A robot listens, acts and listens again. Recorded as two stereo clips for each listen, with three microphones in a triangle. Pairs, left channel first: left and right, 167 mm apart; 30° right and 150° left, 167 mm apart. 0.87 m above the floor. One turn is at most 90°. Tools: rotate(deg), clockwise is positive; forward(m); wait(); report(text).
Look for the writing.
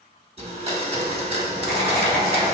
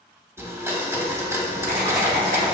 rotate(-90)
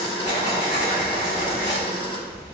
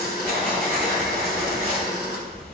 rotate(-50)
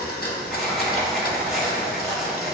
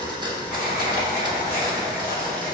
report("Found it: writing, straight ahead.")